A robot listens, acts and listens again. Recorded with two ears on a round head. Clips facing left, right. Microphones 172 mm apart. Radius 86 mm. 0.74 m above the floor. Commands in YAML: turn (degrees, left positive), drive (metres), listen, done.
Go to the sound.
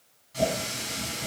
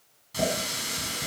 turn: -60
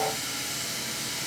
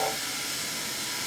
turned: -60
drive: 1.0
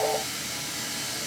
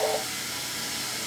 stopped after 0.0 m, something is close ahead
done: "Something is in my way. I am facing the running tap but have not reached it."